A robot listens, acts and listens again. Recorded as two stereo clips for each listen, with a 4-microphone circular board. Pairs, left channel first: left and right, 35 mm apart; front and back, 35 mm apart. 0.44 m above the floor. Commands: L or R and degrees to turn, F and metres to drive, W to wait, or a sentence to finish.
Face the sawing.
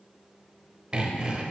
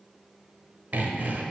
R150
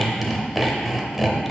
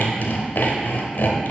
Found it: sawing, straight ahead.